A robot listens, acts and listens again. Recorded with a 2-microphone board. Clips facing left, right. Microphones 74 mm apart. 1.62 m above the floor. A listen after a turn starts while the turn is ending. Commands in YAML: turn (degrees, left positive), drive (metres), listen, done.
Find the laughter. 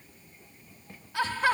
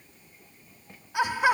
turn: -30
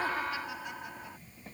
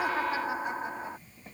turn: -145
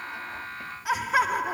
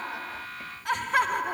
done: "Found it: laughter, straight ahead."